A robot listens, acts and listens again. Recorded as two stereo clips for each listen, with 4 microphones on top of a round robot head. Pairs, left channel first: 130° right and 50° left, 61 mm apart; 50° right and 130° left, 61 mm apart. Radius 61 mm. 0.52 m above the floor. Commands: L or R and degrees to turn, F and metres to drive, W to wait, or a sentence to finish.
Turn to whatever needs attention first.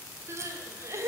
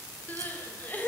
L10
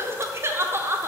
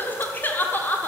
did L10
Found it: crying, straight ahead.